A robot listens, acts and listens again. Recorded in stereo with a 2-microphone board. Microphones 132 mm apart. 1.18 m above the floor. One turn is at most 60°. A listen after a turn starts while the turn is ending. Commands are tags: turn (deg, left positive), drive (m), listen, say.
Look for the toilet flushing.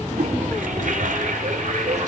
<turn deg="-60"/>
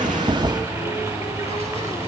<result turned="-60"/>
<turn deg="-30"/>
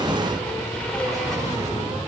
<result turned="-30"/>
<listen/>
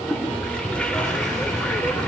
<turn deg="10"/>
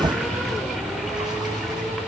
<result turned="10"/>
<listen/>
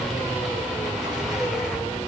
<listen/>
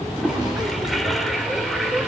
<say>Found it: a toilet flushing, straight ahead, 2 to 4 m away.</say>